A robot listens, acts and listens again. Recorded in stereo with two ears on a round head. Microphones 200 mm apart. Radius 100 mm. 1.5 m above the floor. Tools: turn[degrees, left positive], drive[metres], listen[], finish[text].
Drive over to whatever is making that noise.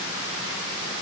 Action: listen[]
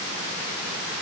Action: listen[]
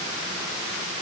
Action: finish[I can't make out anything.]